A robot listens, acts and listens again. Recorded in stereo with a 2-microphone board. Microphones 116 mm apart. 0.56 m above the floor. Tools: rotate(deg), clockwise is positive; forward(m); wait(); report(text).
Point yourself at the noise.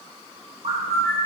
rotate(65)
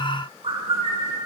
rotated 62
rotate(50)
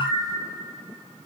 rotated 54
report("Facing the bird, under 1 m away.")